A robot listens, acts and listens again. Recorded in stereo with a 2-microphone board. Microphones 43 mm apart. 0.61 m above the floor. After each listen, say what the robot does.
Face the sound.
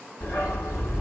Turn 90° left.
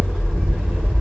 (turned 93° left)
Turn 10° right.
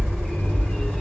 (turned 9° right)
Facing the dog barking.